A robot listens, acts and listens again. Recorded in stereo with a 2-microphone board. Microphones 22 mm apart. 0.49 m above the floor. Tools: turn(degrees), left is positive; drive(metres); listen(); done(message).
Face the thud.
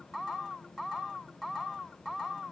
listen()
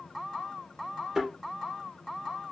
turn(degrees=-20)
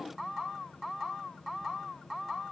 listen()
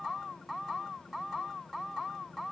done("I heard a thud, but can't make it out now. It was about straight ahead or 140° right.")